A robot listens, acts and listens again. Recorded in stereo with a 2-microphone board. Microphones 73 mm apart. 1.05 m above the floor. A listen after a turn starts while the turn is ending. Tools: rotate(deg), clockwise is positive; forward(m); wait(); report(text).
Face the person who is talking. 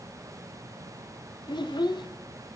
rotate(-90)
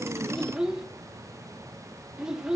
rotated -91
rotate(10)
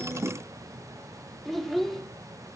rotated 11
report("Facing the child speaking, under 1 m away.")